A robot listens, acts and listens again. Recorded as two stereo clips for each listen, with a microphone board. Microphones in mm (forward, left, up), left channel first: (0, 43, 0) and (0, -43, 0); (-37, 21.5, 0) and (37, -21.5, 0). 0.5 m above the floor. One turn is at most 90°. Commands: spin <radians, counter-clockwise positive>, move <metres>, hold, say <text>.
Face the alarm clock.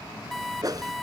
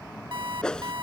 say Found it: an alarm clock, straight ahead.